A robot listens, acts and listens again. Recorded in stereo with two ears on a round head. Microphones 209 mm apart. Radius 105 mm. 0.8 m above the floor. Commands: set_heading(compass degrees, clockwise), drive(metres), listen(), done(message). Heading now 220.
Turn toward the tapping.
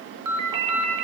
listen()
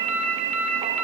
listen()
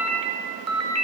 done("I can't make out tapping to turn to.")